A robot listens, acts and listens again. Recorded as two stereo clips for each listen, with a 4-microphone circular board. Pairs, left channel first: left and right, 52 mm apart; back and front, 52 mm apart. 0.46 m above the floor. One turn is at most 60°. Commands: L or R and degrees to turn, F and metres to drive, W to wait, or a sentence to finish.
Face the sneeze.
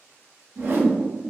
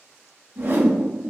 W
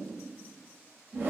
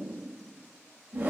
W
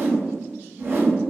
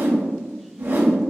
I can't make out a sneeze to turn to.